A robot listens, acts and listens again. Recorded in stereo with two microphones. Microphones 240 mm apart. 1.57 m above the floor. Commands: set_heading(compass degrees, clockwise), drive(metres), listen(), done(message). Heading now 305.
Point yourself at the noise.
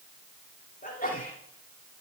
set_heading(270)
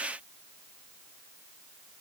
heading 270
listen()
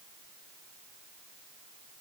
done("I heard a sneeze, but can't make it out now. It was about straight ahead or 110° left.")